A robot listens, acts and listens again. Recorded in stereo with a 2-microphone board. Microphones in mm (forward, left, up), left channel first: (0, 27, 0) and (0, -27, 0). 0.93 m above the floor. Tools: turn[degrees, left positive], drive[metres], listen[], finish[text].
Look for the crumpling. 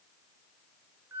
Action: listen[]
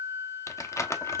Thought: The crumpling: about 60° left or 120° left.
Action: turn[60]
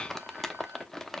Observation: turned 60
Action: finish[Facing the crumpling, under 1 m away.]